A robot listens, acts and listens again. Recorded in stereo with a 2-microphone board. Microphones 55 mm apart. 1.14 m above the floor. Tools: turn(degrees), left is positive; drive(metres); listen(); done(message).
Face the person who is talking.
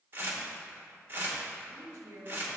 turn(degrees=-90)
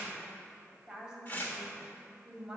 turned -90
turn(degrees=-10)
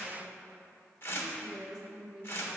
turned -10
done("Facing the woman speaking, 2 to 4 m away.")